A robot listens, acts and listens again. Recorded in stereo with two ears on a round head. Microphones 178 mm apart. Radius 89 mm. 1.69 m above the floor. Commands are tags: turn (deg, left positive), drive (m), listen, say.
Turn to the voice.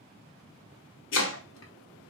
<listen/>
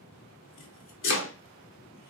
<listen/>
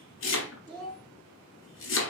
<turn deg="30"/>
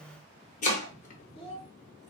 <turn deg="140"/>
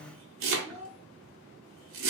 <say>Facing the child speaking.</say>